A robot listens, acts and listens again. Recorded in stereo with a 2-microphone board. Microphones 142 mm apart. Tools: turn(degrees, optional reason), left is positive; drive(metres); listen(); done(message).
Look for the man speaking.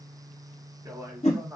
turn(degrees=-15, reason="The man speaking: about 15° right or 165° right.")
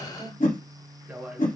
turn(degrees=-30)
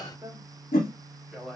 turn(degrees=30)
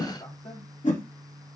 listen()
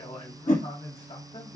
turn(degrees=135, reason="So it is at 135° left.")
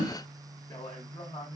turn(degrees=30, reason="The man speaking is now 30° left.")
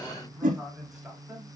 done("Facing the man speaking.")